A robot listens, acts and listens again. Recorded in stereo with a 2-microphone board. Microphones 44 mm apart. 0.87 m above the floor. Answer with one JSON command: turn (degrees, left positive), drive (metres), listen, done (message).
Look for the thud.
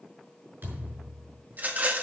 {"turn": -55}
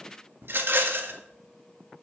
{"listen": true}
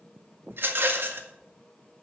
{"done": "I heard a thud, but can't make it out now. It was about straight ahead or 70° right."}